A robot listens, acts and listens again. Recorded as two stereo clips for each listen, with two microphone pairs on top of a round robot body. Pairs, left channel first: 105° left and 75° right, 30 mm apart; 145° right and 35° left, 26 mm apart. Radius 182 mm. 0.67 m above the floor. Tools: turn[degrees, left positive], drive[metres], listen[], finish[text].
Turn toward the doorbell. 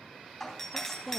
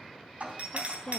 Thought: The doorbell: 15° left.
Action: turn[15]
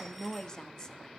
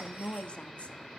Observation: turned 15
Action: listen[]
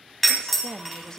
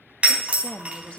Action: finish[Facing the doorbell.]